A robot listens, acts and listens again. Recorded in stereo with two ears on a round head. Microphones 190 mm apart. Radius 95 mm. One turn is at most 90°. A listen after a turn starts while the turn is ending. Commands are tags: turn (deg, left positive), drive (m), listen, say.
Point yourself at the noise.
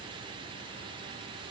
<listen/>
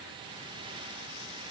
<listen/>
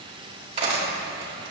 <turn deg="-25"/>
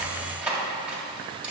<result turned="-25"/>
<say>Facing the cutlery clinking.</say>